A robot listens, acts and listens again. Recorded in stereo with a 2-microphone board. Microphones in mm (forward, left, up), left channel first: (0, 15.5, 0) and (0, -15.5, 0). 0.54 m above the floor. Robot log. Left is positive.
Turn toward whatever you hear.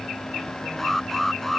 cmd yaw +30
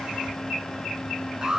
note: So it is at 25° right.
cmd yaw -25
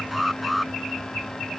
end: Found it: an alarm, straight ahead.